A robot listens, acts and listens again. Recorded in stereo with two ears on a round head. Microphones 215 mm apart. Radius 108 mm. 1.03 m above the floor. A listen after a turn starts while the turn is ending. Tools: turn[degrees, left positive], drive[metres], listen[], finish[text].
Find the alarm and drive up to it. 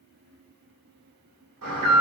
Thought: The alarm: about 65° right or 115° right.
Action: turn[-65]
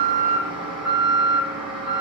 Action: drive[1.0]
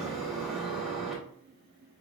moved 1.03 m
Action: drive[1.0]
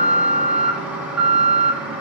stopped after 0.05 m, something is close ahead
Action: finish[I am next to the alarm.]